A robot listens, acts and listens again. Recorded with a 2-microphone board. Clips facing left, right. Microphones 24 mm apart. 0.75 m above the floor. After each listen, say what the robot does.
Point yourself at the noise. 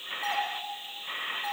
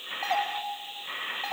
Turn 45° right.
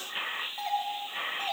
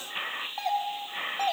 Turn 75° right.
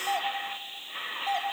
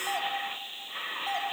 Found it: a doorbell, straight ahead.